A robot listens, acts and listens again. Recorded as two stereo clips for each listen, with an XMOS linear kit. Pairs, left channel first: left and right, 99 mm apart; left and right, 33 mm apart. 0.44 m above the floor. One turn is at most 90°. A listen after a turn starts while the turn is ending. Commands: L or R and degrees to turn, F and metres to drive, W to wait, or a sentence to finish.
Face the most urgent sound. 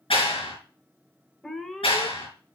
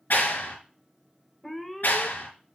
L30
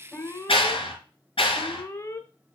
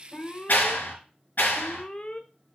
L90
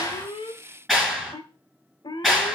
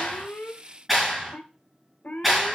L65
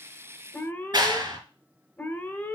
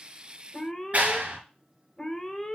L20
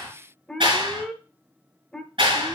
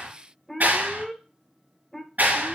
Facing the alarm.